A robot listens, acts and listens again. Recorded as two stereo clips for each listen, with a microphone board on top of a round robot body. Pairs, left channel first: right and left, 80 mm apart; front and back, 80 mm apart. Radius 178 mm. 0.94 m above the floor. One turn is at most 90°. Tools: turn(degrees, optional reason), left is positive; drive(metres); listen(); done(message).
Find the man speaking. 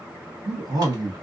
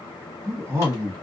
turn(degrees=90, reason="The man speaking: 120° left.")
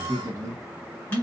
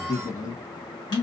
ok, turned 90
turn(degrees=45, reason="The man speaking is now 45° left.")
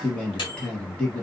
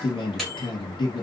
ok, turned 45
turn(degrees=-15, reason="The man speaking is now 15° right.")
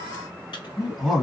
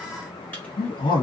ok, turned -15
done("Found it: a man speaking, straight ahead.")